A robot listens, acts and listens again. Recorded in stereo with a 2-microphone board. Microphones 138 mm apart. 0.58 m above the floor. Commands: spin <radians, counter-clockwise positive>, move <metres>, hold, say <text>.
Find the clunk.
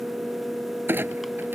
spin -0.52
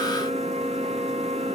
hold
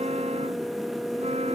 say I heard a clunk, but can't make it out now. It was about 15° left or 135° right.